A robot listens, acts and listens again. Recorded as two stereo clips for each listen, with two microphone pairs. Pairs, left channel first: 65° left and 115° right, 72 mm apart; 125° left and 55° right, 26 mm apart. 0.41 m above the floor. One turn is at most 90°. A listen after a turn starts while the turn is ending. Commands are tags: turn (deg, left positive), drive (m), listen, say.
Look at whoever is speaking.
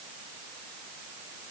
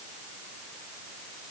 <listen/>
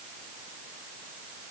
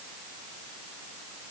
<listen/>
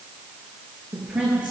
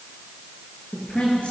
<turn deg="90"/>
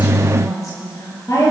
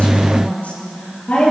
<turn deg="90"/>
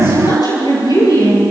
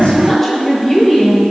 <turn deg="55"/>
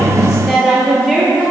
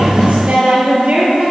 <turn deg="-15"/>
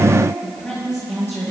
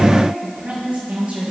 <say>Found it: a woman speaking, straight ahead.</say>